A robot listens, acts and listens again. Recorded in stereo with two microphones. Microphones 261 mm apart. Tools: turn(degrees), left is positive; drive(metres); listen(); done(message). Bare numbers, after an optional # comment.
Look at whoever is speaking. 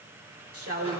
# The woman speaking: about 60° right or 120° right.
turn(-60)
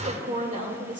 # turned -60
# So it is at 30° right.
turn(-30)
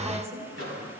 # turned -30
# The woman speaking is now 10° right.
turn(-10)
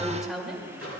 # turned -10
done("Facing the woman speaking.")